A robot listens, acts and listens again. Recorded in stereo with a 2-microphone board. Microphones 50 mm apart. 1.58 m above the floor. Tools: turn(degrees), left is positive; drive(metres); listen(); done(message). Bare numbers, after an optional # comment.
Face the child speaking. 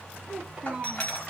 turn(-30)
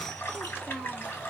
# So it is at 15° left.
turn(15)
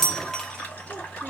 listen()
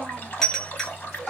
listen()
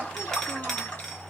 done("I heard a child speaking from this way, but can't make it out now.")